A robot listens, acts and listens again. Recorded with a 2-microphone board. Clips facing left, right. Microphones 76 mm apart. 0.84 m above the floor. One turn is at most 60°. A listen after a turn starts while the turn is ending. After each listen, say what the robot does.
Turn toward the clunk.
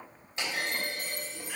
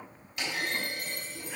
Turn 30° left.
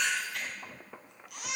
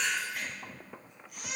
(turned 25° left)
Keep listening.
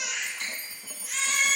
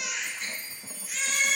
I heard a clunk, but can't make it out now. It was about 5° left or 125° left.